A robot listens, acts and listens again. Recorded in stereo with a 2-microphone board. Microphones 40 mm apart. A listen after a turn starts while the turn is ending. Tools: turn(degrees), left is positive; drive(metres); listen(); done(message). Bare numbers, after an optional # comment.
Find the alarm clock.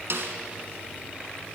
listen()
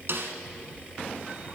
listen()
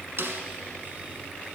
done("I can't make out an alarm clock to turn to.")